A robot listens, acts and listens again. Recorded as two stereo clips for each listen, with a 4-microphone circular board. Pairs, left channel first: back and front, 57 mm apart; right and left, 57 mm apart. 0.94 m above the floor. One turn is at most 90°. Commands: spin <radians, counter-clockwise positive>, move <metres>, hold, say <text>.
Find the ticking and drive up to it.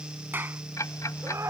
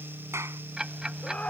spin 1.57
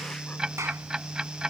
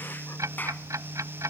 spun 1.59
spin 1.40
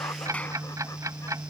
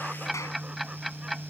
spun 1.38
move 1.0
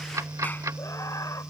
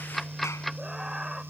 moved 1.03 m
move 1.0
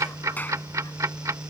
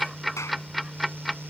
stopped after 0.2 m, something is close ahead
say I am next to the ticking.